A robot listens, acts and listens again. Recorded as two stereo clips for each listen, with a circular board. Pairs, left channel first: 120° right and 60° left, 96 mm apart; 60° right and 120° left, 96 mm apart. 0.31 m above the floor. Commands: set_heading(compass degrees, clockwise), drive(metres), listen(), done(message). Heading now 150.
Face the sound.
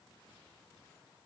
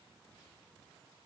listen()
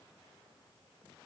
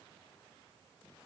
listen()
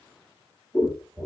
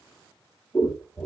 done("Facing the scissors.")